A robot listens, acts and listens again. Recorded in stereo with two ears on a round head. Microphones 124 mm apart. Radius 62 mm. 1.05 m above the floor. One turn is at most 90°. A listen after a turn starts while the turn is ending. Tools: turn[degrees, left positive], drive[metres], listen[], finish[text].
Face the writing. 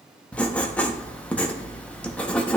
Action: turn[30]
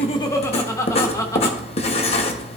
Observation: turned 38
Thought: So it is at 135° left.
Action: turn[90]
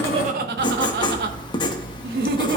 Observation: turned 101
Thought: The writing is now 35° left.
Action: turn[35]
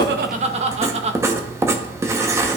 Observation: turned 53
Thought: The writing is now 20° right.
Action: turn[-20]
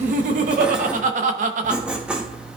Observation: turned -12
Action: finish[Facing the writing.]